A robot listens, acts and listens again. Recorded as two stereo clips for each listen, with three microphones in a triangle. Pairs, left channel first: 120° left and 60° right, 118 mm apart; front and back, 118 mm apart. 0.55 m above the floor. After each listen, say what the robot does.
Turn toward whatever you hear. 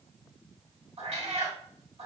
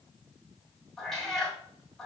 Turn 85° right.
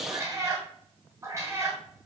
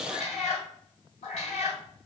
Found it: a cat meowing, straight ahead, 2 to 4 m away.